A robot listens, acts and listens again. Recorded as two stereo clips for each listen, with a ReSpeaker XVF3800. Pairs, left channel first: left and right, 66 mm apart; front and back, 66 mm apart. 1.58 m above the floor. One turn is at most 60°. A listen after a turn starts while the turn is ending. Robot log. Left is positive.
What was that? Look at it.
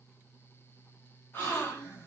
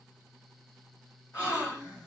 note: The gasp: 35° left.
cmd yaw +35
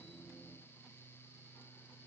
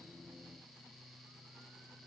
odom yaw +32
end: I heard a gasp from this way, but can't make it out now.